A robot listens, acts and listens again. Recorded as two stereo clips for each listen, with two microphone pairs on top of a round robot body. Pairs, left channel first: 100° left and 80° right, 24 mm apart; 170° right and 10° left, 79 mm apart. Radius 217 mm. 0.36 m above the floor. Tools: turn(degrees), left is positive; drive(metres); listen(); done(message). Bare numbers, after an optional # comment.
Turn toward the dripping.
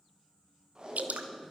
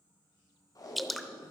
# The dripping: 80° right.
turn(-80)
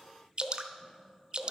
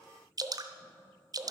# The dripping is now 30° right.
turn(-30)
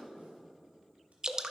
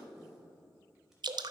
# The dripping is now 20° right.
turn(-20)
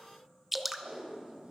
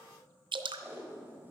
done("Facing the dripping.")